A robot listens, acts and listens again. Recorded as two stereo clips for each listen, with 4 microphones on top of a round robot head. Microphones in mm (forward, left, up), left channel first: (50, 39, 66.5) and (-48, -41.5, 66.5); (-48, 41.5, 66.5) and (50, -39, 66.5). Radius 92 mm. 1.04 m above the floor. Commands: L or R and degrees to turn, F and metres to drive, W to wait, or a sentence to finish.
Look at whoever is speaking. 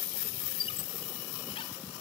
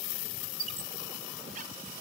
W
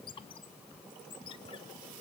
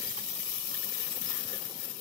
W
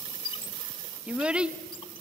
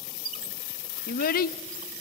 L140
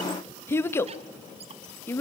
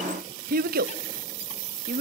R35
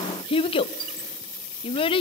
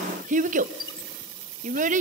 R10
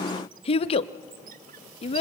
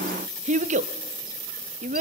Facing the child speaking, under 1 m away.